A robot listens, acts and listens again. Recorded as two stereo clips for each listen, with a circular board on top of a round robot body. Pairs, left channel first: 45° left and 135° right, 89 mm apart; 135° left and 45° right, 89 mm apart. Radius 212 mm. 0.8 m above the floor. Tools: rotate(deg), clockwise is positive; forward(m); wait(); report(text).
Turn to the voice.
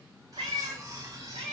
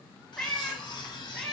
wait()
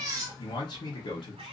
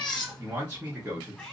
rotate(-25)
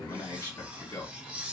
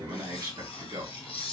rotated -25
report("Facing the man speaking.")